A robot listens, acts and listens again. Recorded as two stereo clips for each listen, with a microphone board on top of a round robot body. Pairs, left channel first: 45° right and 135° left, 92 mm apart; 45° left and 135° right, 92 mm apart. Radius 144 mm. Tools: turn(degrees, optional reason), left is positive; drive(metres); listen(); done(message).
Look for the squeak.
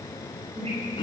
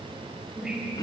turn(degrees=140, reason="The squeak: 140° left.")
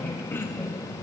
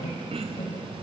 turn(degrees=35, reason="The squeak is now 35° left.")
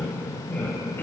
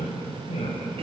turn(degrees=30, reason="The squeak is now 30° left.")
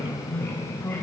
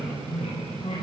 turn(degrees=20, reason="The squeak is now 20° left.")
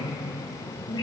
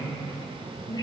done("Found it: a squeak, straight ahead.")